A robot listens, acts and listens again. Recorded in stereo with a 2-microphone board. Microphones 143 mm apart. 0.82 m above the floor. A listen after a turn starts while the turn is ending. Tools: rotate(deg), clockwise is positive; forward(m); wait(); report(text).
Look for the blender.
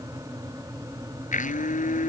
rotate(-65)
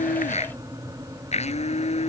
rotate(-50)
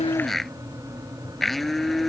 report("Found it: a blender, straight ahead.")